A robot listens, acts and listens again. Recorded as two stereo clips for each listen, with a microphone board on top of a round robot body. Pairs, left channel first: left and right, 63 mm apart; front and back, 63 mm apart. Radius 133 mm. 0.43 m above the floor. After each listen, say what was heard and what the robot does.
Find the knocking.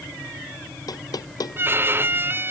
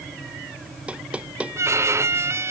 The knocking: 110° left. Turn 110° left.
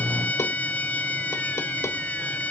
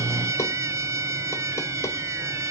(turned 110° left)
Keep listening.
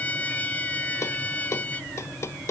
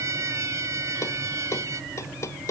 The knocking is now 45° left. Turn 45° left.
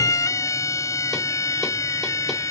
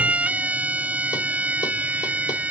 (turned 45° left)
Keep listening.
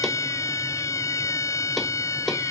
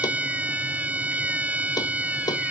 Keep listening.
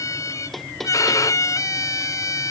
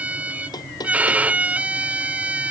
Facing the knocking.